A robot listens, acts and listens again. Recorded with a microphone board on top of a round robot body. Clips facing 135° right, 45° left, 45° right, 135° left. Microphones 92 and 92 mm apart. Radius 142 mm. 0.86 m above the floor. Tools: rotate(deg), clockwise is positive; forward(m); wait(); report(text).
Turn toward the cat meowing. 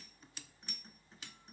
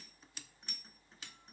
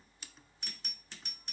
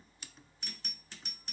wait()
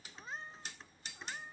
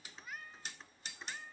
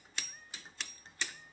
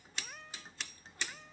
rotate(-150)
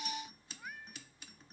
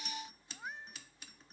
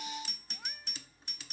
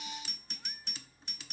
wait()
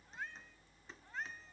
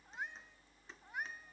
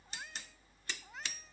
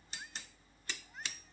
rotate(30)
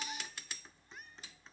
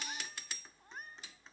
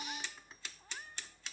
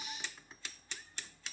wait()
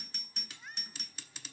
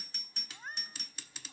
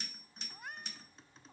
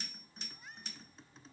report("Found it: a cat meowing, straight ahead.")